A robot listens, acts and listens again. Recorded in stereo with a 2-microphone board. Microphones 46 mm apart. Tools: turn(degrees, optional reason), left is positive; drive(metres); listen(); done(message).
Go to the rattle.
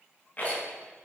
turn(degrees=35, reason="The rattle: about 35° left or 145° left.")
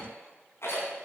turn(degrees=110, reason="So it is at 110° left.")
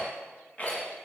turn(degrees=30, reason="The rattle is now 30° left.")
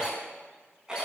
turn(degrees=-15, reason="The rattle is now 15° right.")
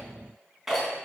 drive(metres=1.0)
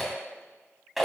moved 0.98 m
drive(metres=1.0)
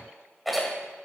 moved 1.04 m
drive(metres=1.0)
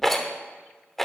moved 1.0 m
drive(metres=1.0)
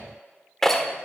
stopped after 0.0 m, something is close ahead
turn(degrees=10, reason="The rattle is now 10° left.")
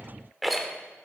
done("I am next to the rattle.")